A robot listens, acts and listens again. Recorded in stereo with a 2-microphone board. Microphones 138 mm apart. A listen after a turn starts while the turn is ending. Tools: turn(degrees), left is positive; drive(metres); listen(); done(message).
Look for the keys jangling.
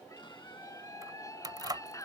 turn(degrees=-30)
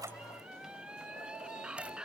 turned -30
listen()
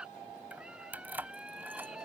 turn(degrees=-15)
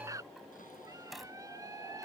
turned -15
done("Facing the keys jangling.")